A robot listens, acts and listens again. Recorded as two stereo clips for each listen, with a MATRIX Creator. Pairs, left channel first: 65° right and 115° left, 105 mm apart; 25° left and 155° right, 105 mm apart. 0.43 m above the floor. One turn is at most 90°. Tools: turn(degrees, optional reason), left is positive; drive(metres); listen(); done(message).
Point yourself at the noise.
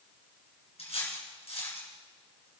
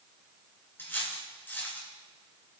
turn(degrees=-45, reason="The cutlery clinking: 45° right.")
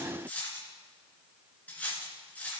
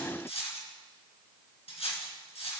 turn(degrees=10, reason="The cutlery clinking is now 10° left.")
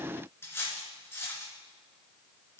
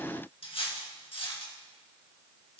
done("Found it: cutlery clinking, straight ahead.")